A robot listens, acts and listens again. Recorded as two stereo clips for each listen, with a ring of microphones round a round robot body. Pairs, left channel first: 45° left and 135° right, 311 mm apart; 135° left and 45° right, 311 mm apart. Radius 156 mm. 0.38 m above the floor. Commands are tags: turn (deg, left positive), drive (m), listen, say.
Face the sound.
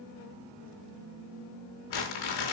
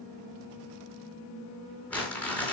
<turn deg="50"/>
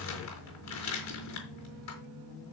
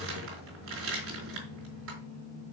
<say>Found it: crumpling, straight ahead.</say>